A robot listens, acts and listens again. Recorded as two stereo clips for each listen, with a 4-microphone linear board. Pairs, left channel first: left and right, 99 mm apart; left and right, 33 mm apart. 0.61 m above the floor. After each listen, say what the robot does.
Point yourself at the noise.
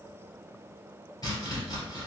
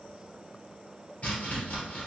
Turn 40° left.
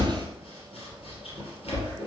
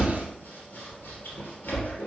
Turn 100° left.
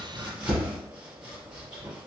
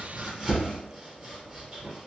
Turn 10° right.
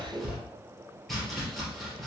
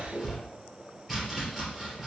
Found it: chopping, straight ahead, 2 to 4 m away.